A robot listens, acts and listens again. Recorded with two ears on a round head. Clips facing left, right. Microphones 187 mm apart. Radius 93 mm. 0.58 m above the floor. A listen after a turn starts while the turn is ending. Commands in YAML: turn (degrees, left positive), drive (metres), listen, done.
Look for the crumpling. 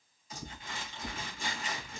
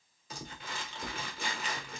turn: -50
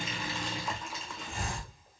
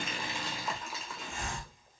done: "Found it: crumpling, straight ahead, 1 to 2 m away."